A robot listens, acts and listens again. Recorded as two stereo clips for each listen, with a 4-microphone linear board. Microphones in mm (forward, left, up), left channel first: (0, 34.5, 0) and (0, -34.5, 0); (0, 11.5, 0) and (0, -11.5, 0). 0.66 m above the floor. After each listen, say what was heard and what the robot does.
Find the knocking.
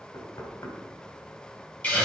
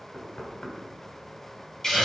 The knocking: about 60° left or 120° left. Turn 60° left.
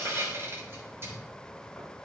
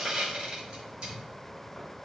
Keep listening.
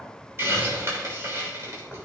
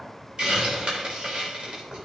Facing the knocking.